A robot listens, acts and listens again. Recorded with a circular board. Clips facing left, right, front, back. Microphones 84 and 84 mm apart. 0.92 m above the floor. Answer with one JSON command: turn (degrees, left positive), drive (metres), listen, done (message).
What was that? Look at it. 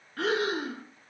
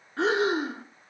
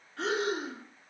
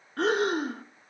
{"turn": -155}
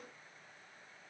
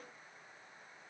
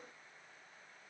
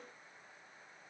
{"listen": true}
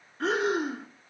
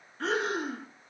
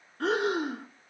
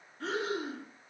{"done": "Facing the breathing."}